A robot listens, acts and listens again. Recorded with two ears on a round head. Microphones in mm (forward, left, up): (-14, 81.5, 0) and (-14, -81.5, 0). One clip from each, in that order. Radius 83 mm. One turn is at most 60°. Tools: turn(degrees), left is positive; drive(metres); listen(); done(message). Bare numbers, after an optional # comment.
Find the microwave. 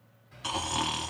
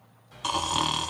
turn(-60)
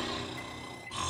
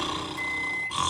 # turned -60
# So it is at 35° right.
turn(-35)
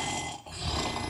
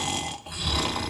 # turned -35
listen()
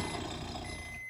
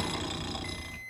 done("Facing the microwave, 1 to 2 m away.")